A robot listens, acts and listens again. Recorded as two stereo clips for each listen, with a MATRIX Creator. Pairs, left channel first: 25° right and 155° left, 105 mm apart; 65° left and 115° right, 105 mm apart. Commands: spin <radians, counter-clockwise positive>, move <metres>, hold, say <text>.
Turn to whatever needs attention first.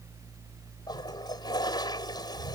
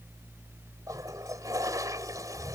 hold
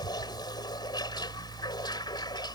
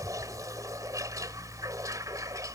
hold
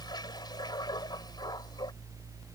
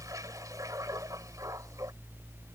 say I can't make out anything urgent, only a toilet flushing.